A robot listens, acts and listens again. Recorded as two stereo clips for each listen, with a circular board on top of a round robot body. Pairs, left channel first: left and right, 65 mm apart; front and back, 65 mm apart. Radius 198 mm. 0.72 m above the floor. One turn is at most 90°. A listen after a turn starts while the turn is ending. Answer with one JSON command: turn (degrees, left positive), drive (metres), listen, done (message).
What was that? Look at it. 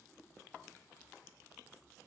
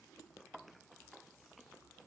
{"listen": true}
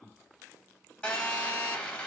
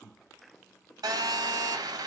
{"turn": 90}
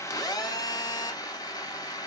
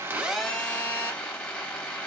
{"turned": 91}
{"turn": 70}
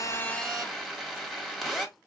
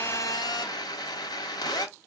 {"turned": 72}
{"done": "Facing the phone buzzing, 1 to 2 m away."}